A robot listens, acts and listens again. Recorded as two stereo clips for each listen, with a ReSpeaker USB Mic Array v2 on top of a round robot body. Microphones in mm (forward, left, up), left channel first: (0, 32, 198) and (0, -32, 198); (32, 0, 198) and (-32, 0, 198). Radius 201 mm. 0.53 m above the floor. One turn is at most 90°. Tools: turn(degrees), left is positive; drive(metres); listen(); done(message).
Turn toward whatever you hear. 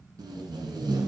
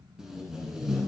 turn(degrees=-90)
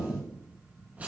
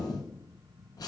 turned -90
turn(degrees=-20)
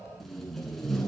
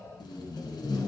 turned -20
done("Facing the tape being pulled, 1 to 2 m away.")